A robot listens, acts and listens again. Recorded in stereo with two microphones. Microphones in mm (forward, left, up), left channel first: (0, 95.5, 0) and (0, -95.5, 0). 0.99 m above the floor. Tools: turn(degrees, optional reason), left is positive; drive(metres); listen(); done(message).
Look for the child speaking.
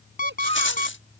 turn(degrees=-70, reason="The child speaking: about 70° right or 110° right.")
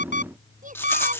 turn(degrees=-45, reason="So it is at 45° right.")
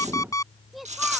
done("Found it: a child speaking, straight ahead.")